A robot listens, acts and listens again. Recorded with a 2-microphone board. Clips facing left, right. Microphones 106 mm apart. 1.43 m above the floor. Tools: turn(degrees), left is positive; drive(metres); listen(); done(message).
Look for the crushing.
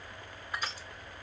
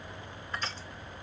turn(degrees=30)
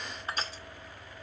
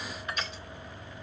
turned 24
turn(degrees=145)
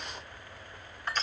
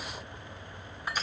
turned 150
turn(degrees=-10)
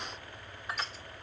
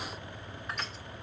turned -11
done("Found it: crushing, straight ahead, 2 to 4 m away.")